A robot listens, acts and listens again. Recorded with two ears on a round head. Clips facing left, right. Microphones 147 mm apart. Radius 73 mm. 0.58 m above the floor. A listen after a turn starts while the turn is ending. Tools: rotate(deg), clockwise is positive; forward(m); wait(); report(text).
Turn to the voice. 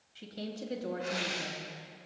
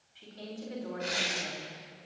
rotate(-50)
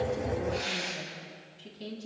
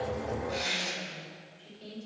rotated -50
rotate(-80)
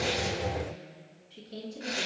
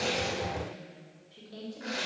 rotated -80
rotate(-35)
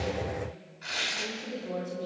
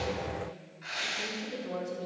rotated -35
report("Found it: a woman speaking, straight ahead.")